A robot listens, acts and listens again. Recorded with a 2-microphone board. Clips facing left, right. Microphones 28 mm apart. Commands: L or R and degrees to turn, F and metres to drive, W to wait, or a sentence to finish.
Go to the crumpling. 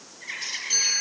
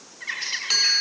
W
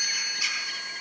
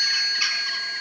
W
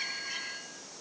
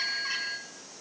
I can't make out crumpling, only a bird and a chime.